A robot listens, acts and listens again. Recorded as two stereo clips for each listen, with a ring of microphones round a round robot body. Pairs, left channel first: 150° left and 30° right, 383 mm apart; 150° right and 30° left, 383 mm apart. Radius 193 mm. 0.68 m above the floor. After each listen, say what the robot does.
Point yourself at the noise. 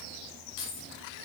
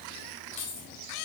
Turn 170° right.
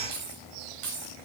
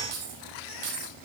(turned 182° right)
Turn 30° left.
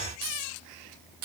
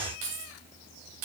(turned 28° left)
Turn 10° left.
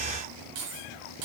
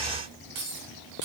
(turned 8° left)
Turn 10° left.
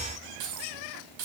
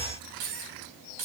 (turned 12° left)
Found it: keys jangling, straight ahead.